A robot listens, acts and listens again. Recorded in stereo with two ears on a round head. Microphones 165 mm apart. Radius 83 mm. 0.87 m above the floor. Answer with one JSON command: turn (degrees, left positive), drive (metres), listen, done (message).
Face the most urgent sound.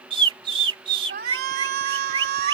{"turn": -55}
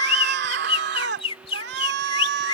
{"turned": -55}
{"turn": -65}
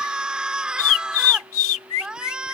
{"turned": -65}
{"done": "Facing the shout."}